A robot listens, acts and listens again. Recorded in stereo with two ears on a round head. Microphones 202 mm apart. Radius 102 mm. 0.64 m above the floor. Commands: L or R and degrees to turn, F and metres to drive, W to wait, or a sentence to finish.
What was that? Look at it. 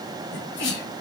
L55
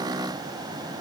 W
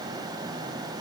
I heard a sneeze, but can't make it out now. It was about straight ahead or 70° left.